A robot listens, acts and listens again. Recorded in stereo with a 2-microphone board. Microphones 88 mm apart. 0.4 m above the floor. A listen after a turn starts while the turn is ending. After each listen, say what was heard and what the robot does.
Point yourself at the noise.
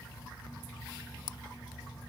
Keep listening.
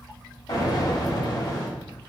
The explosion: about 55° left or 125° left. Turn 55° left.
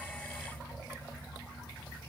Keep listening.
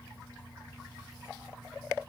I heard an explosion, but can't make it out now. It was about straight ahead or 70° left.